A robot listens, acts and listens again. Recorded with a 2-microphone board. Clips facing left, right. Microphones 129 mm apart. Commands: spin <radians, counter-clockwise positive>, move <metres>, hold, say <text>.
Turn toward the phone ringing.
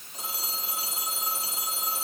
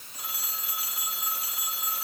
spin 0.44
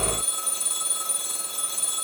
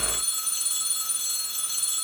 spin 2.18
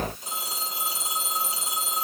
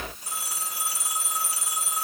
spin 0.35
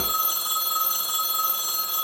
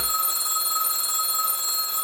say Facing the phone ringing.